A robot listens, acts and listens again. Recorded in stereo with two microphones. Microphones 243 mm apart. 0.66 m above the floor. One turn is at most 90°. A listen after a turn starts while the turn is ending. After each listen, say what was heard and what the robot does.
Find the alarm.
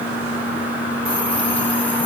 Keep listening.
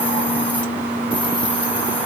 Keep listening.
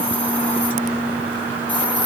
I can't make out an alarm to turn to.